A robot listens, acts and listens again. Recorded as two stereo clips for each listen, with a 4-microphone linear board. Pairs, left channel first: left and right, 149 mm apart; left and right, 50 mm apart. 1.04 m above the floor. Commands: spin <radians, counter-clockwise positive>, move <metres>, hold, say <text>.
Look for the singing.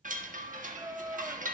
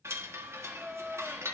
spin -0.26
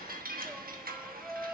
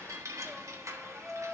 say Found it: singing, straight ahead, under 1 m away.